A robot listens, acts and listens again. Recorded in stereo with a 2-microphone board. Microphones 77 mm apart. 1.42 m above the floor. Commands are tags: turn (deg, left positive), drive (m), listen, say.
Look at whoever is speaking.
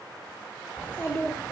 <turn deg="25"/>
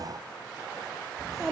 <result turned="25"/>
<say>Facing the child speaking.</say>